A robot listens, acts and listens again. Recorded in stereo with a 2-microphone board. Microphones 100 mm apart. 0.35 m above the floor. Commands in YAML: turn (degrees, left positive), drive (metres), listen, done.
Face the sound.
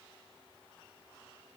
listen: true
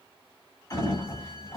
turn: 35
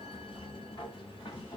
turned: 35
turn: 105
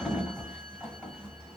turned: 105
done: "Found it: a sliding door, straight ahead."